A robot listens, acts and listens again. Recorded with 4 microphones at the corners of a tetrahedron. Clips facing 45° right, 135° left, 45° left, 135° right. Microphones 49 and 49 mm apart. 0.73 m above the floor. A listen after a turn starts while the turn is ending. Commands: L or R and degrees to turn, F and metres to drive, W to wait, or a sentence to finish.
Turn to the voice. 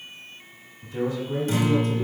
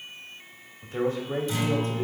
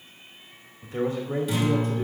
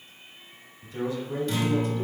L90
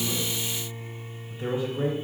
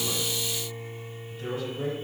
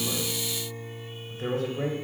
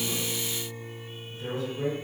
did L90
L15
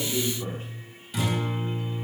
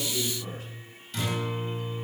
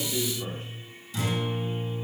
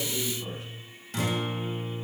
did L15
Facing the man speaking.